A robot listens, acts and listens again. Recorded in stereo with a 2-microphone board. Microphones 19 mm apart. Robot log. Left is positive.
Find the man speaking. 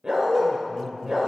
cmd yaw +30
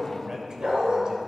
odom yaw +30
note: So it is at 35° right.
cmd yaw -35
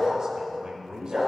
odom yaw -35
note: The man speaking is now 45° right.
cmd yaw -45
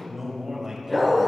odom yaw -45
note: The man speaking is now 20° right.
cmd yaw -20
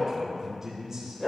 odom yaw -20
note: The man speaking is now 15° right.
cmd yaw -15
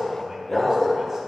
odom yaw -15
cmd idle
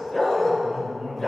end: Found it: a man speaking, straight ahead, 2 to 4 m away.